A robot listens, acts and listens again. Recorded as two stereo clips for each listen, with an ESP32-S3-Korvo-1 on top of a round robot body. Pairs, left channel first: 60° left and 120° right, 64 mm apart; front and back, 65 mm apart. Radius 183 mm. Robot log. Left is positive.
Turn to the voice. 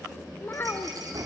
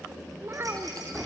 note: The child speaking: 125° left.
cmd yaw +125
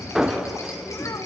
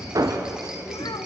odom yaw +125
cmd idle
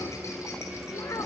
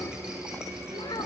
note: The child speaking is now 15° left.
cmd yaw +15
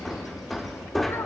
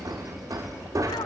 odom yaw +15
cmd idle
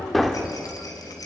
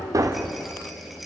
cmd idle
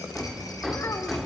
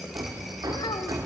end: Facing where the child speaking came from. I can't hear it now.